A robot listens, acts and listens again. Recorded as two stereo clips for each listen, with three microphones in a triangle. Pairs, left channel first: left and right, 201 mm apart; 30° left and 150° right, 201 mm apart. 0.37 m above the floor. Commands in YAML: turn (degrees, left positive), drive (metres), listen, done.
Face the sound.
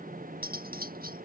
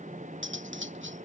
turn: -135
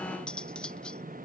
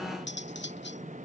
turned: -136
done: "Facing the cutlery clinking."